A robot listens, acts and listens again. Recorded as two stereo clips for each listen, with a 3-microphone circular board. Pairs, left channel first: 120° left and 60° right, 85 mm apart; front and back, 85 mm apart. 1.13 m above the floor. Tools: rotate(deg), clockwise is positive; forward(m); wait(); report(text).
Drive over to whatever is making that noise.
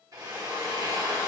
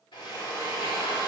rotate(15)
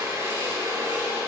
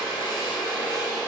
forward(1.0)
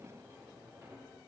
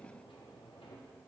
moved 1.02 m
wait()
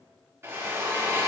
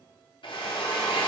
forward(1.0)
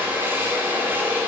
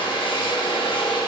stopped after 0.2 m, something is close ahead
report("Arrived at the drill, straight ahead.")